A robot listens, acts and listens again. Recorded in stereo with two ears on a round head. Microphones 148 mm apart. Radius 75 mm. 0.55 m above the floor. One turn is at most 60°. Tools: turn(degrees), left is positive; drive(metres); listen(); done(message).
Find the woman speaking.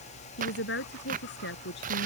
turn(degrees=60)
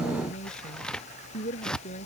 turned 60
turn(degrees=40)
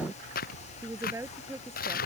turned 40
turn(degrees=-15)
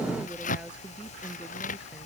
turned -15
listen()
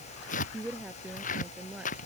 done("Found it: a woman speaking, straight ahead.")